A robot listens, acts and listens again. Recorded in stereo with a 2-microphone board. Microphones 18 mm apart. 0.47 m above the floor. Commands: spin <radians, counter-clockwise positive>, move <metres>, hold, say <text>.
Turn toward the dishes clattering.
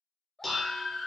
spin 0.52
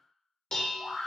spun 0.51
spin 2.36
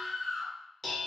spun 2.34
say Found it: dishes clattering, straight ahead, under 1 m away.